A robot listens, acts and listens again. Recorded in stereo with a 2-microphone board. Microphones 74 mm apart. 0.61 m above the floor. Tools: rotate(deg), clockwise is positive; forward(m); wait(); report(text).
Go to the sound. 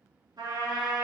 rotate(70)
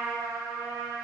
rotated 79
rotate(30)
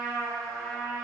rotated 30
forward(1.0)
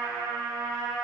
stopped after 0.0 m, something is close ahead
report("Blocked. The trumpet is further on, straight ahead.")